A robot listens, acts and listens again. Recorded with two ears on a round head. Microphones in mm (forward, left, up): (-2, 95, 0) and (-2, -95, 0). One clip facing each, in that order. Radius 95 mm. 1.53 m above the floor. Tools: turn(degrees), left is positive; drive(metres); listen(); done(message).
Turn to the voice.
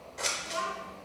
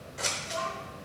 turn(degrees=50)
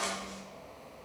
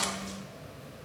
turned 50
listen()
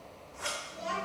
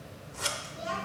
done("Facing the child speaking.")